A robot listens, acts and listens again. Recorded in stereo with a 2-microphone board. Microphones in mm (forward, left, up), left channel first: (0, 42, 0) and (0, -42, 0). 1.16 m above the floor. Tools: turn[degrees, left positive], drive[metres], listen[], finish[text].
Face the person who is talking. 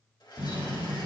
Action: listen[]
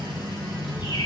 Action: turn[30]
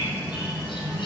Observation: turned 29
Thought: So it is at 150° left.
Action: turn[150]
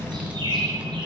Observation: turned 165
Thought: The child speaking is now 15° right.
Action: turn[-15]
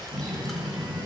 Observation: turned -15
Action: finish[Facing the child speaking.]